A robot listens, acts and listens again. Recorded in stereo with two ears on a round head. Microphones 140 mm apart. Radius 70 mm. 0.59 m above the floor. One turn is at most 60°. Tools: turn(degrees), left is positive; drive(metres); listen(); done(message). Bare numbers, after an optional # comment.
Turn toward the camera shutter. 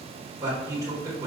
listen()
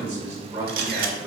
# The camera shutter: about 65° right or 115° right.
turn(-60)
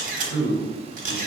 # So it is at 55° right.
turn(-55)
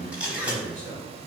# The camera shutter is now 10° right.
turn(-10)
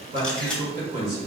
done("Found it: a camera shutter, straight ahead.")